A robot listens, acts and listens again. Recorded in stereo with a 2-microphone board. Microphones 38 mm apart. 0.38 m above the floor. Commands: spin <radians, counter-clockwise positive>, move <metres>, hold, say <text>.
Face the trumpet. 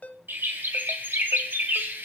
hold
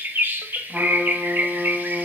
spin -0.52
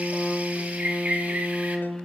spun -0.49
spin 0.26
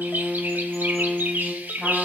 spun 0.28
say Facing the trumpet.